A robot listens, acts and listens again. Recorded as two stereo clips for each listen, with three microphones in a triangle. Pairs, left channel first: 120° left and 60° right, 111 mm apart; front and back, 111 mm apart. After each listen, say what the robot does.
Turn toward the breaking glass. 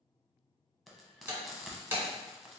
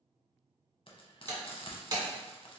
Turn 130° right.
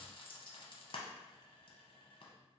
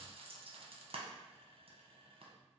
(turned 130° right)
Facing where the breaking glass came from. I can't hear it now.